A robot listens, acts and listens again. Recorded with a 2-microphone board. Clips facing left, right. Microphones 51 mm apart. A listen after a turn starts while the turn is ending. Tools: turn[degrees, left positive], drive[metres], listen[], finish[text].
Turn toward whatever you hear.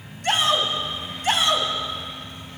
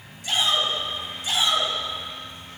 Thought: The shout: about 55° left or 125° left.
Action: turn[55]
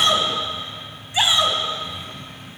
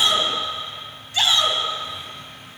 Thought: So it is at 20° left.
Action: turn[20]
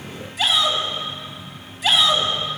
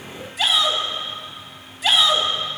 Action: finish[Facing the shout.]